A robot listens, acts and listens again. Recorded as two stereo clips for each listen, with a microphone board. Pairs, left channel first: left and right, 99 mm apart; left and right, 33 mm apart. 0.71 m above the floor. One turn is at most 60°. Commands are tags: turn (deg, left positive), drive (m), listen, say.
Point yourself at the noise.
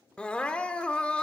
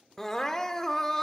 <turn deg="30"/>
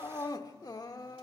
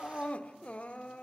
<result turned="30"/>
<turn deg="60"/>
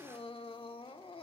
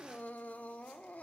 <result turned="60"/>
<turn deg="60"/>
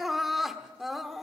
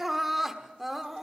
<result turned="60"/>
<say>Found it: crying, straight ahead.</say>